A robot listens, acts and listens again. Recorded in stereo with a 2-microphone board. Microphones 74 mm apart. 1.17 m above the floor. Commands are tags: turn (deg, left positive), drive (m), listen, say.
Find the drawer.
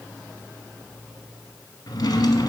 <turn deg="60"/>
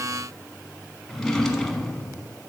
<say>Found it: a drawer, straight ahead.</say>